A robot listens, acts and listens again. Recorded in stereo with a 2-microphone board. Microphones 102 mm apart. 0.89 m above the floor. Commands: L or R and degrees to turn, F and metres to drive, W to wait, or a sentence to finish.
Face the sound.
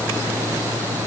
W
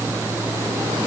W
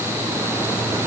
I can't make out anything to turn to.